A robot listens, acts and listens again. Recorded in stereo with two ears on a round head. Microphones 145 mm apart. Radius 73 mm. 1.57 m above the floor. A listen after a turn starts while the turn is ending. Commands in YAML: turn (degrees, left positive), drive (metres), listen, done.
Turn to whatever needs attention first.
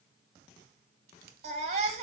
turn: -40
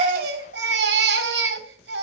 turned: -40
turn: -95
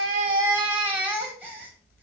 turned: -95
turn: -10
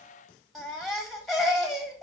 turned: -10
done: "Facing the baby crying, 1 to 2 m away."